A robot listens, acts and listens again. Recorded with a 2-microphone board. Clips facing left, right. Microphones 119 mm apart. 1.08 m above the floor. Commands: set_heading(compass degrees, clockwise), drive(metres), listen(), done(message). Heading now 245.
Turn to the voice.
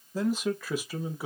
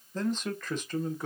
set_heading(215)
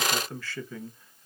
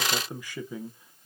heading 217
set_heading(237)
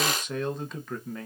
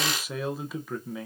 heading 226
done("Facing the man speaking.")